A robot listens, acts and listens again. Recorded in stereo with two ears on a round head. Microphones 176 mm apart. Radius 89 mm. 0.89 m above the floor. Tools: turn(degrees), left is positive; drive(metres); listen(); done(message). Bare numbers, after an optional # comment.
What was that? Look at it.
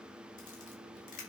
# The camera shutter: about 45° left or 135° left.
turn(45)
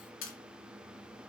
# So it is at 90° left.
turn(90)
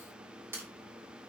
# The camera shutter is now 10° right.
turn(-10)
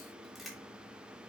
done("Facing the camera shutter.")